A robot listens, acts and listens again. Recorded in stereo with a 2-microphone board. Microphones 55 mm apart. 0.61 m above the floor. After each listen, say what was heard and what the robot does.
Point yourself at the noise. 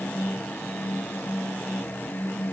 Keep listening.
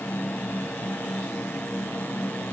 Keep listening.
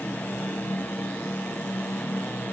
I can't make out anything.